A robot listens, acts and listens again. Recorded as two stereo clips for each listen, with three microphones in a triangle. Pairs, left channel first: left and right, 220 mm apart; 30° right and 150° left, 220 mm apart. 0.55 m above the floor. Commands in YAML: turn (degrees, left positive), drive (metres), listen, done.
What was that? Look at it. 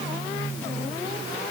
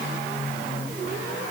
listen: true
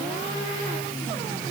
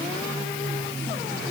listen: true
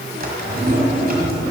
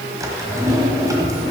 turn: -135
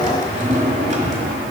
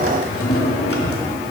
turn: -35
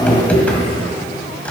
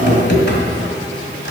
done: "Facing the drawer."